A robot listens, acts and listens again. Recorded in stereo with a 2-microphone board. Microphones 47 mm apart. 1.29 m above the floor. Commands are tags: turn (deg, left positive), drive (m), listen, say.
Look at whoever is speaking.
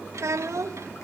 <turn deg="-90"/>
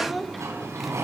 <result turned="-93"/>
<say>Facing the child speaking.</say>